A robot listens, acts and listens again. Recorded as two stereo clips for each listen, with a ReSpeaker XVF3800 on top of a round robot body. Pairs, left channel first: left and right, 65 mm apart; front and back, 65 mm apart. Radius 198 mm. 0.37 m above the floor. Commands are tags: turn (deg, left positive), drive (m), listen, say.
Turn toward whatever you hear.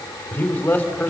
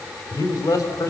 <turn deg="25"/>
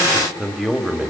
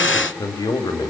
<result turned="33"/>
<say>Found it: a man speaking, straight ahead, 2 to 4 m away.</say>